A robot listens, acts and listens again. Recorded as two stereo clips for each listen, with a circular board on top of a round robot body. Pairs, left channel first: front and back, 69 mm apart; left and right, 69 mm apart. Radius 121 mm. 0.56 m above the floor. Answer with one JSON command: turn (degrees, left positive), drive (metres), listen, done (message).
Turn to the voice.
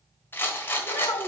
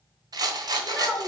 {"done": "Found it: a child speaking, straight ahead."}